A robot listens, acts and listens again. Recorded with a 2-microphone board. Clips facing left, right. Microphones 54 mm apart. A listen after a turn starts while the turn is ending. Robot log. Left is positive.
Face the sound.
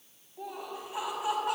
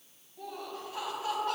note: The laughter: about 15° left or 165° left.
cmd yaw +15
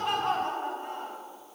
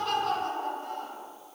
note: The laughter: about 30° left or 150° left.
cmd yaw +30
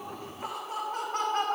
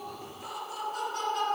note: So it is at 130° left.
cmd yaw +130
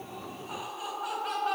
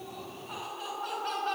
note: The laughter is now 10° left.
cmd yaw +10
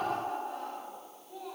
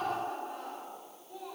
end: Found it: laughter, straight ahead, over 4 m away.